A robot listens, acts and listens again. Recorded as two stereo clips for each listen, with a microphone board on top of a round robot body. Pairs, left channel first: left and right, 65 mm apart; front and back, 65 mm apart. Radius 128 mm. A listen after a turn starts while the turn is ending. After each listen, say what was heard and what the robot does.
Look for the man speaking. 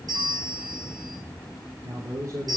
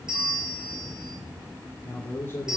The man speaking: 55° right. Turn 55° right.
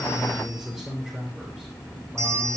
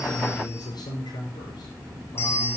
Found it: a man speaking, straight ahead, over 4 m away.